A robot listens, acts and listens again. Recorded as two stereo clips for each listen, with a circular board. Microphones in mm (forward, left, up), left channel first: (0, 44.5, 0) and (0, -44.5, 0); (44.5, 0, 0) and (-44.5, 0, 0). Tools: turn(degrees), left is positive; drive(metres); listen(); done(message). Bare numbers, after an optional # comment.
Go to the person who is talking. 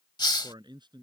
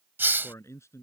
# The man speaking: 55° right.
turn(-55)
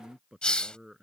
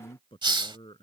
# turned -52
drive(1.0)
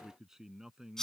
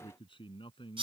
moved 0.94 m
drive(1.0)
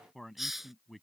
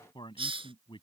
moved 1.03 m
drive(1.0)
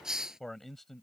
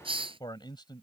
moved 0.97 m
drive(1.0)
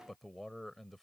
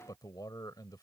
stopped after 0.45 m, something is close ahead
done("Arrived at the man speaking, straight ahead.")